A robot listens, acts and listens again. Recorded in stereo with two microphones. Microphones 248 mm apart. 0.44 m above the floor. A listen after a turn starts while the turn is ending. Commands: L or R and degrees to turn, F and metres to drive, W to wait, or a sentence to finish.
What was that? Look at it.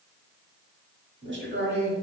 R40
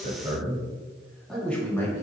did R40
L15
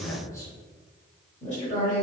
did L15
L35
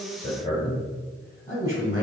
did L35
L25
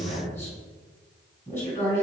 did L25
Found it: a man speaking, straight ahead.